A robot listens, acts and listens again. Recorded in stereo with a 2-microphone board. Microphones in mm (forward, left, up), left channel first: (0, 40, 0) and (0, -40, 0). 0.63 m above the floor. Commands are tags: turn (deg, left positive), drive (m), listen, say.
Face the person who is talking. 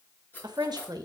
<turn deg="-55"/>
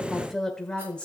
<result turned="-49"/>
<turn deg="15"/>
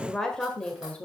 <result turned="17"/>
<turn deg="20"/>
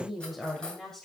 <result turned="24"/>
<turn deg="10"/>
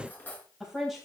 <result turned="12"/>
<say>Facing the woman speaking, 2 to 4 m away.</say>